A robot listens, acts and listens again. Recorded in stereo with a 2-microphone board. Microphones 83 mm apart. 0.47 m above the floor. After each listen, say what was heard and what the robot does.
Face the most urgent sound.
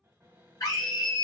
The scream: about 45° left or 135° left. Turn 45° left.
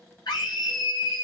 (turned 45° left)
So it is at 75° left. Turn 75° left.
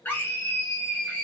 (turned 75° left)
The scream is now 30° left. Turn 30° left.
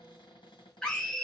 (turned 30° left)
The scream is now 10° left. Turn 10° left.
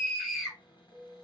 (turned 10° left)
Found it: a scream, straight ahead, 1 to 2 m away.